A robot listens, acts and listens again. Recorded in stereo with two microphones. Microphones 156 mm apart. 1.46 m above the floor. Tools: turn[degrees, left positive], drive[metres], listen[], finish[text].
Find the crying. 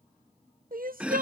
Thought: The crying: about 75° right or 105° right.
Action: turn[-75]
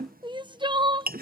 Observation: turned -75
Thought: So it is at 30° right.
Action: turn[-30]
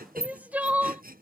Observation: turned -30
Thought: The crying is now 10° right.
Action: turn[-10]
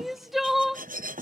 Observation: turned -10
Action: finish[Found it: crying, straight ahead.]